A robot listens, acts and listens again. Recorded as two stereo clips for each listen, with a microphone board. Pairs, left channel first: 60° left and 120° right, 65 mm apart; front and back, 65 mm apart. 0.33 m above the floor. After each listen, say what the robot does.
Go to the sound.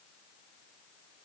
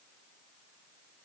Keep listening.
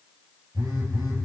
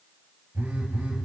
Turn 120° right.
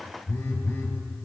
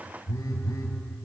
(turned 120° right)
Drive 1.0 m forward.
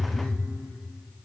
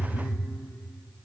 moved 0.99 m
Drive 1.0 m forward.
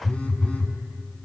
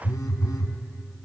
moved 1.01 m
Turn 10° right.
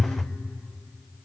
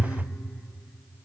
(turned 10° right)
Drive 1.0 m forward.
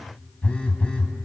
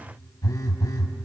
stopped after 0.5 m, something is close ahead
Turn 10° right.
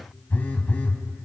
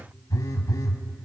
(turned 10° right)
Arrived at the phone buzzing, straight ahead.